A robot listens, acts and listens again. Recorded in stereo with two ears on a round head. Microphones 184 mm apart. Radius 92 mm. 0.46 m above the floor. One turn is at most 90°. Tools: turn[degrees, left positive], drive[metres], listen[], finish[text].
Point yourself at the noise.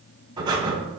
Thought: The breathing: about 20° right or 160° right.
Action: turn[-20]
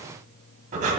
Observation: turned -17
Thought: So it is at 140° right.
Action: turn[-90]
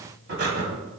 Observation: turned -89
Thought: The breathing is now 50° right.
Action: turn[-50]
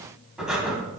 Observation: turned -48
Action: finish[Found it: breathing, straight ahead.]